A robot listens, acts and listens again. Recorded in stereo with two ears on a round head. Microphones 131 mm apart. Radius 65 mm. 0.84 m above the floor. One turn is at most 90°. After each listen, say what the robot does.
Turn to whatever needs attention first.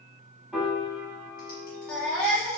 Turn 30° left.
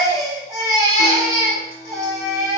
Turn 25° right.
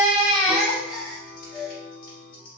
Found it: a baby crying, straight ahead, 1 to 2 m away.